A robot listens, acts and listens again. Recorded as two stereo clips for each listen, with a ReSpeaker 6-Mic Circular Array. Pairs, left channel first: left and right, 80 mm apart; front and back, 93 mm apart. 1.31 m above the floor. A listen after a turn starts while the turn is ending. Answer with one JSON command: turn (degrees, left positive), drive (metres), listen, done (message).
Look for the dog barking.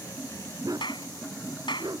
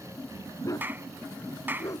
{"turn": -55}
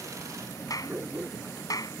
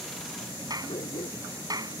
{"turn": -30}
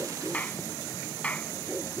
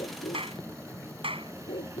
{"done": "Found it: a dog barking, straight ahead."}